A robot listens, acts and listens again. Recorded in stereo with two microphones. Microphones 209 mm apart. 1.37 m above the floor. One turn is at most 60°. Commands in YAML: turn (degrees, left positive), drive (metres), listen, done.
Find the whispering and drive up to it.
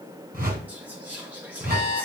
turn: -30
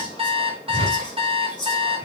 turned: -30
turn: 20
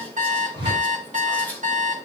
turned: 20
turn: 10
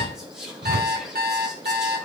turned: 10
drive: 1.0
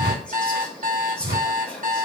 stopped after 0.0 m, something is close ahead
done: "Something is in my way. I am facing the whispering but have not reached it."